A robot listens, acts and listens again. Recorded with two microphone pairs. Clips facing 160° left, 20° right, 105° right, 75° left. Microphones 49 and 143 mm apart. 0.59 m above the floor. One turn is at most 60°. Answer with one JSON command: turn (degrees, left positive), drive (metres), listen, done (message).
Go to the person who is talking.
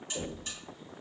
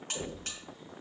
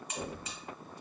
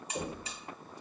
{"listen": true}
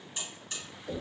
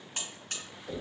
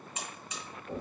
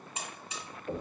{"listen": true}
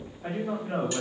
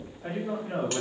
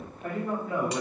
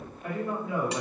{"turn": -60}
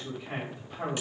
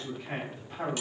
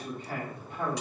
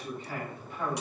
{"turn": -60}
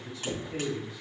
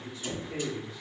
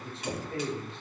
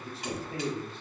{"turn": -10}
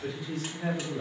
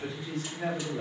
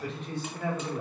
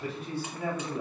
{"drive": 1.0}
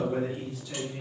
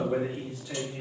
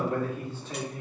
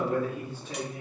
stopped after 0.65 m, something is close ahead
{"done": "I am next to the man speaking."}